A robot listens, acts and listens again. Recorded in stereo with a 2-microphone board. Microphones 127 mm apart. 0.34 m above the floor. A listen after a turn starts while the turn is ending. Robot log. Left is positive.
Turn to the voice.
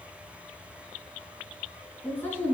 note: The woman speaking: about 15° left or 165° left.
cmd yaw +15
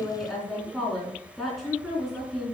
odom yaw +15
end: Facing the woman speaking.